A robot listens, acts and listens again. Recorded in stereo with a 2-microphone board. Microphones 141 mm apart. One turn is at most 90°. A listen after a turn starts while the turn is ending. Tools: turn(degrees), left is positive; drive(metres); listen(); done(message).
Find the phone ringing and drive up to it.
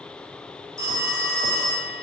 turn(degrees=-25)
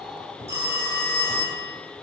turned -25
turn(degrees=-90)
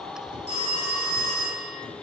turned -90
turn(degrees=-55)
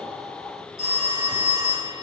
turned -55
drive(metres=1.0)
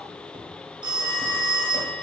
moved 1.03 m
turn(degrees=-15)
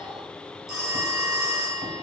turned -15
drive(metres=1.0)
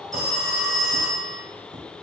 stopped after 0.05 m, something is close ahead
done("I am next to the phone ringing.")